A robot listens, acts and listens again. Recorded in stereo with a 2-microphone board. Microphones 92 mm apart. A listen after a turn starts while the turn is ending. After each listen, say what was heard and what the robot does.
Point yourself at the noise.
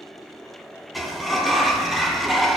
Turn 30° left.
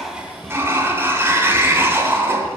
So it is at 30° right. Turn 30° right.
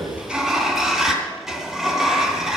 Found it: a sliding door, straight ahead.